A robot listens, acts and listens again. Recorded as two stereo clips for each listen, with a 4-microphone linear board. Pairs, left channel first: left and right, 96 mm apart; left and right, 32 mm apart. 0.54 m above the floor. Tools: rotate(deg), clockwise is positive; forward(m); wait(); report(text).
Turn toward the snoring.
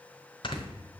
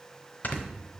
rotate(-55)
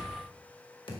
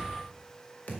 wait()
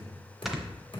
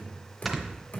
report("Facing the snoring, 1 to 2 m away.")